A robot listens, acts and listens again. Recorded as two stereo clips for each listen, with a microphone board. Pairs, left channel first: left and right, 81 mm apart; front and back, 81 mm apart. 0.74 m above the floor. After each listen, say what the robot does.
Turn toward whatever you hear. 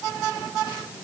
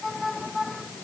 Keep listening.
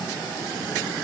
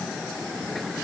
Keep listening.
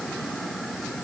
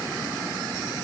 I can't make out anything to turn to.